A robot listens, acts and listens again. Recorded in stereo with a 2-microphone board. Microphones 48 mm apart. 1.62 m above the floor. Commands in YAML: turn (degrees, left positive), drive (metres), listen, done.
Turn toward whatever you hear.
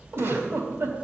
turn: -55
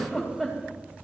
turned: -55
turn: -10
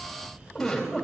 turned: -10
done: "Found it: a giggle, straight ahead."